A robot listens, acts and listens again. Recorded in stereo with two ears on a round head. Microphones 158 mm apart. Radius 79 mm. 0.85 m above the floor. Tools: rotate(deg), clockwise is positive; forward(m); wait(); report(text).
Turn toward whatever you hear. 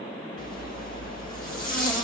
rotate(-50)
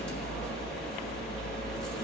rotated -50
report("Found it: a zipper, straight ahead, 2 to 4 m away.")